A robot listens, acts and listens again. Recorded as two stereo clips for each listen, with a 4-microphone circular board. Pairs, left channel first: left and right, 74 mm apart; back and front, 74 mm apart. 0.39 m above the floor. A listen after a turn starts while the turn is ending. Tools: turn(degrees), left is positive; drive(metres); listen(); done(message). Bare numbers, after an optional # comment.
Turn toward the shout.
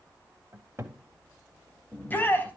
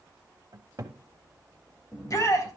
# The shout: 150° left.
turn(150)
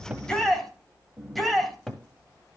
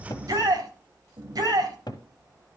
done("Found it: a shout, straight ahead.")